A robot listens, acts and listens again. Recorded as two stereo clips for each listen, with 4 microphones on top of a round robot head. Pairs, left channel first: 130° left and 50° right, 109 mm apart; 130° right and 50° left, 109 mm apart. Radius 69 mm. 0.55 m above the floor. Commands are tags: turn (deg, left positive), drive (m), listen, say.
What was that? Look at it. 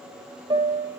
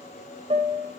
<say>Facing the piano.</say>